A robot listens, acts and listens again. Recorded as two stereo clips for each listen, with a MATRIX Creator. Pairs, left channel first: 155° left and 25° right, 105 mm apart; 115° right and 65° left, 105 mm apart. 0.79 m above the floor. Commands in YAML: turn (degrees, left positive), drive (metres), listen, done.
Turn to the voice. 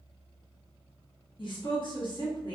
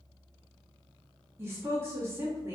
turn: 130
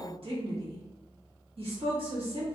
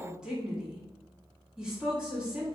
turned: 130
turn: -15
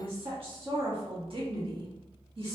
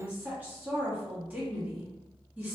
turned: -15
done: "Facing the woman speaking."